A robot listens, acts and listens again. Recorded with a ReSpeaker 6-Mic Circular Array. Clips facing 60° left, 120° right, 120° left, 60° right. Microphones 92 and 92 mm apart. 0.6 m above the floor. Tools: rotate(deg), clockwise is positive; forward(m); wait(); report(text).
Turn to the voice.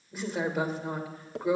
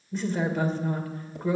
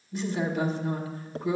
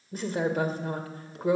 rotate(20)
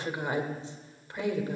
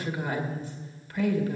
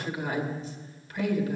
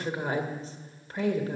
report("Found it: a woman speaking, straight ahead.")